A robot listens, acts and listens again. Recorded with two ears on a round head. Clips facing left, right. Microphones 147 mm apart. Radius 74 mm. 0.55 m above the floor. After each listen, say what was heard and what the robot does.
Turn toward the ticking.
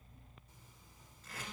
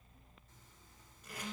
Keep listening.
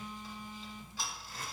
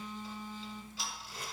The ticking: about 45° left or 135° left. Turn 45° left.
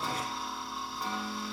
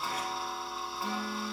Found it: ticking, straight ahead.